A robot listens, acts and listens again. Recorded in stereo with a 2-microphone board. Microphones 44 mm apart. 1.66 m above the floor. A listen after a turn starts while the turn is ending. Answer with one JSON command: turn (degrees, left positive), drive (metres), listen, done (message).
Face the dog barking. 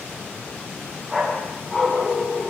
{"turn": 30}
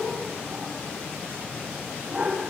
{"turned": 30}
{"turn": -30}
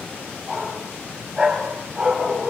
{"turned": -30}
{"turn": -15}
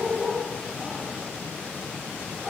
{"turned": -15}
{"done": "Found it: a dog barking, straight ahead, 2 to 4 m away."}